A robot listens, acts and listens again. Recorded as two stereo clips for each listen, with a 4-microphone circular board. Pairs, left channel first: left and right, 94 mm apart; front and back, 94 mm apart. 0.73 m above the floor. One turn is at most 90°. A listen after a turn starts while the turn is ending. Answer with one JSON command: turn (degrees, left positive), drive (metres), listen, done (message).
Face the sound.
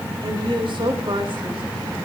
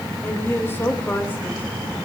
{"turn": -65}
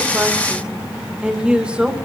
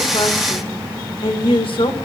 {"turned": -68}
{"turn": -10}
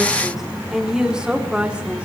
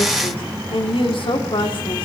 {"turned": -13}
{"turn": -10}
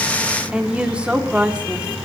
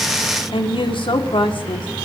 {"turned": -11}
{"turn": -10}
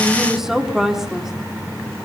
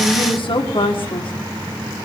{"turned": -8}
{"done": "Facing the woman speaking, 1 to 2 m away."}